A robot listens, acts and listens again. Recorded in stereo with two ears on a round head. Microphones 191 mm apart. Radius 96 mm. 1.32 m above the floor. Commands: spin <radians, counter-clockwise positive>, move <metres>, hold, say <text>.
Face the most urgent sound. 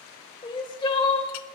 spin 0.35
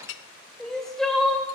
say Found it: crying, straight ahead.